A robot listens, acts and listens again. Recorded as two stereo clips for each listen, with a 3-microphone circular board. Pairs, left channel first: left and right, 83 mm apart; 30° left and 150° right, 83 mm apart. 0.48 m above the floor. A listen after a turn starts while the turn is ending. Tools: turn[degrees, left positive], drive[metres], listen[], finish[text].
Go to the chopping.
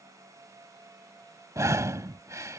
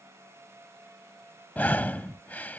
Action: listen[]
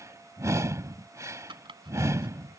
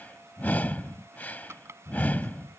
Thought: The chopping: 95° right.
Action: turn[-95]
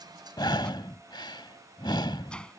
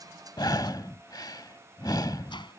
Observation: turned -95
Action: listen[]
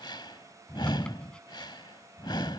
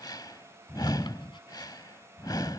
Action: listen[]
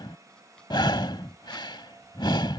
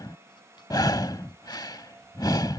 Action: finish[I heard chopping from this way, but can't make it out now. I did not reach it.]